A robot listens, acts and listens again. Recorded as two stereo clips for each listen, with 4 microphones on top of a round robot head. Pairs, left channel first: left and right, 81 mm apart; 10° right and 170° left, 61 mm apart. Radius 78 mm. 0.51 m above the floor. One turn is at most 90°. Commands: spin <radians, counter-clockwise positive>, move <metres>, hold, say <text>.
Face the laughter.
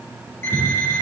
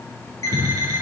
spin -0.79
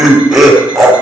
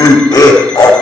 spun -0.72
say Facing the laughter, over 4 m away.